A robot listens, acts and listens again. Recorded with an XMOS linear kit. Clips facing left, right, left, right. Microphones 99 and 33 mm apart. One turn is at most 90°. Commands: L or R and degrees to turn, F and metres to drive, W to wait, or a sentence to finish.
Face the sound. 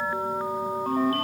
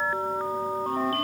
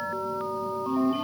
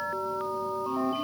L50
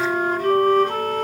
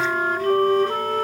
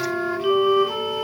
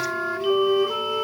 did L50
L75
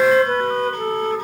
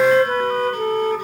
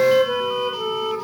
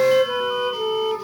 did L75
R10
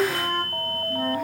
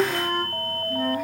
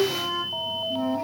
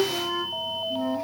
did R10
Found it: a flute, straight ahead.